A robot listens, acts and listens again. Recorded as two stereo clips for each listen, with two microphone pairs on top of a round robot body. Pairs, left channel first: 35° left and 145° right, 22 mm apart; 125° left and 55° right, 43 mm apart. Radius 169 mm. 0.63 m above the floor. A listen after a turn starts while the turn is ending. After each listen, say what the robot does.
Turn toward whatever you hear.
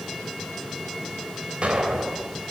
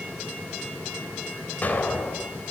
Turn 180° left.
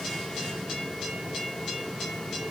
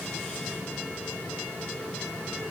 Facing where the explosion came from. I can't hear it now.